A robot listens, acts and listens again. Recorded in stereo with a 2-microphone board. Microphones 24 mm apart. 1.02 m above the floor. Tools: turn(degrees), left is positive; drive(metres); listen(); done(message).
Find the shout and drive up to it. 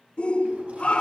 turn(degrees=50)
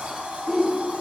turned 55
drive(metres=1.0)
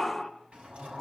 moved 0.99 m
drive(metres=1.0)
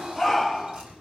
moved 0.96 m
drive(metres=1.0)
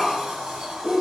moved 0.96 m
drive(metres=1.0)
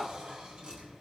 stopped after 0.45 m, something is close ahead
listen()
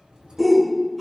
done("Arrived at the shout, straight ahead.")